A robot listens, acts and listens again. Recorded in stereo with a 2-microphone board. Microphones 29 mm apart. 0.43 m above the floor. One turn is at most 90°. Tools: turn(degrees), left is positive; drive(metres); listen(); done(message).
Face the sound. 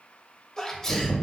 turn(degrees=20)
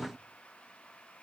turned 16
listen()
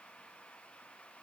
done("I heard a sneeze, but can't make it out now. It was about straight ahead or 145° left.")